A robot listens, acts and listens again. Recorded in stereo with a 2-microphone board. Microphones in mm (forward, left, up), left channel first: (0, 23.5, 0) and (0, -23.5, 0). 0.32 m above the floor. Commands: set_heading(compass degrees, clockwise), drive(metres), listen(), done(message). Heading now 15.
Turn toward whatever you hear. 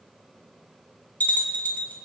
set_heading(335)
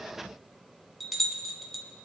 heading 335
done("Found it: a bell, straight ahead.")